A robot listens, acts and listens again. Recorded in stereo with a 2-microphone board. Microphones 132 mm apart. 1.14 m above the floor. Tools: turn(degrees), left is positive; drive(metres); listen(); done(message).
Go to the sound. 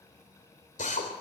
turn(degrees=75)
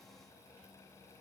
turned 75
listen()
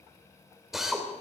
drive(metres=1.0)
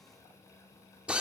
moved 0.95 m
turn(degrees=-10)
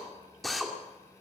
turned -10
drive(metres=1.0)
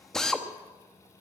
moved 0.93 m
drive(metres=1.0)
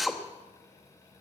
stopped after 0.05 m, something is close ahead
done("Arrived at the drill, straight ahead.")